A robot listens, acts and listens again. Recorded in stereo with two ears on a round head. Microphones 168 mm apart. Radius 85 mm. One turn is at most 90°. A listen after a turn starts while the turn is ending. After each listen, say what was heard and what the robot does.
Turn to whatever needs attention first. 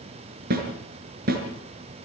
Keep listening.
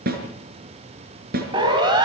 The siren: about 25° right or 155° right. Turn 25° right.
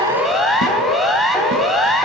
Found it: a siren, straight ahead, over 4 m away.